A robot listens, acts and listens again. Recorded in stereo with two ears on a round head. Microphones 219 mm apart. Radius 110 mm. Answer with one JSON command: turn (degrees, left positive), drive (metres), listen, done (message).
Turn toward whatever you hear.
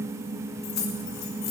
{"turn": 90}
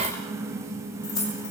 {"turn": 20}
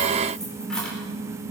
{"done": "Found it: keys jangling, straight ahead, over 4 m away."}